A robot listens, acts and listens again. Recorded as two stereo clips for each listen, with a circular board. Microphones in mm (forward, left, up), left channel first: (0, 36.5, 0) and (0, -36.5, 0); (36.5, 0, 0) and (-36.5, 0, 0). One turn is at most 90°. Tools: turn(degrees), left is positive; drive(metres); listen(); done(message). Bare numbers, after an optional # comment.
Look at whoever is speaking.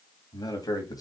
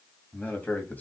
# The man speaking: 65° left.
turn(65)
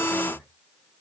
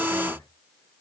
# The man speaking is now 35° left.
turn(35)
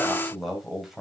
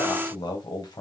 done("Facing the man speaking.")